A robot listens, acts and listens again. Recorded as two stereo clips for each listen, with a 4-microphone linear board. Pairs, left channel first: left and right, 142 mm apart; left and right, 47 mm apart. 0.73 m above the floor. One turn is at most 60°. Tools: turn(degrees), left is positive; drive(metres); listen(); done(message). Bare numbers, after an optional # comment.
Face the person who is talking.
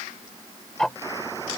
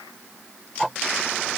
listen()
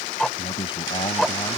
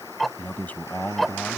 # The man speaking: about 35° left or 145° left.
turn(35)
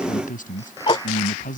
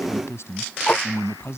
# So it is at 105° left.
turn(60)
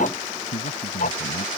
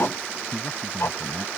# The man speaking is now 65° left.
turn(60)
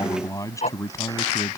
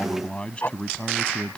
# The man speaking is now 25° left.
turn(25)
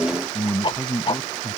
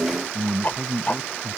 done("Facing the man speaking.")